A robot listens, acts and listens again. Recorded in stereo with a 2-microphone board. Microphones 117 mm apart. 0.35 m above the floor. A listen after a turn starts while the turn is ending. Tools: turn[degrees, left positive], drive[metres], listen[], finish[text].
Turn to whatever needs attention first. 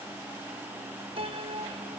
Action: listen[]
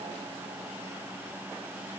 Action: listen[]
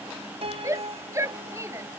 Thought: The shout: about 25° right or 155° right.
Action: turn[-25]
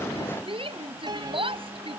Thought: So it is at 130° right.
Action: turn[-130]
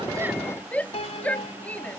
Thought: The shout is now 10° left.
Action: turn[10]
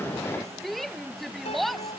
Action: finish[Found it: a shout, straight ahead.]